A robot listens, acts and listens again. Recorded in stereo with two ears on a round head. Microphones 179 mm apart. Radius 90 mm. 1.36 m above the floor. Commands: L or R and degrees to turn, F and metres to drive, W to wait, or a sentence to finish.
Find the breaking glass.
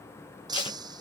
R20
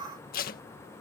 W
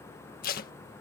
I heard breaking glass, but can't make it out now. It was about straight ahead or 140° right.